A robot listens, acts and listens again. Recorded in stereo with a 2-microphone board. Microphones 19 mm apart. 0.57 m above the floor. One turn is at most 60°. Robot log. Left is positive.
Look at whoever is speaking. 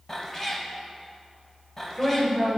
note: The woman speaking: about 65° left or 115° left.
cmd yaw +60
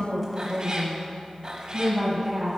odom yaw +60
end: Facing the woman speaking.